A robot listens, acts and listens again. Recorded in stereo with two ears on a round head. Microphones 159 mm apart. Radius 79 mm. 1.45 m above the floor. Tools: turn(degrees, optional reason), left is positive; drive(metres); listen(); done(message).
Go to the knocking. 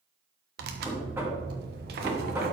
turn(degrees=-30)
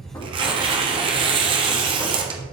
listen()
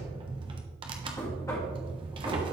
turn(degrees=20, reason="So it is at 20° left.")
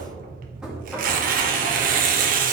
drive(metres=1.0)
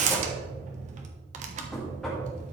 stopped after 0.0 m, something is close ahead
done("Something is in my way. I am facing the knocking but have not reached it.")